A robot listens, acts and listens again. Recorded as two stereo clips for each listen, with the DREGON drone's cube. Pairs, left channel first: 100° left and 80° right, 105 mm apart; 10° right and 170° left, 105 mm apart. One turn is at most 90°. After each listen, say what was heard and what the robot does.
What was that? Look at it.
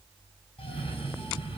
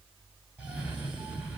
The cough: 95° left. Turn 90° left.
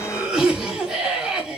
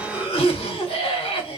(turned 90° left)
Facing the cough, 2 to 4 m away.